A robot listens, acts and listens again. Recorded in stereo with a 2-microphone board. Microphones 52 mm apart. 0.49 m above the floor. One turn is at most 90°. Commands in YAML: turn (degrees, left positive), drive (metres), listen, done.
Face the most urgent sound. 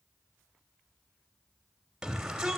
turn: -30
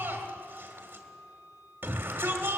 turn: -90
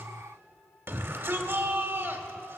turn: -50
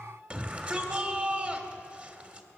turn: -25
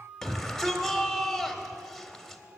done: "Found it: a shout, straight ahead, 1 to 2 m away."